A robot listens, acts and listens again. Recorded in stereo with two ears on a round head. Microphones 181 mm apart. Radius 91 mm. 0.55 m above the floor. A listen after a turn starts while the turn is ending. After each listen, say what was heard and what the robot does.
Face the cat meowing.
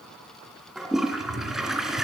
The cat meowing: about 70° right or 110° right. Turn 70° right.
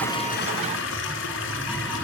Found it: a cat meowing, straight ahead, over 4 m away.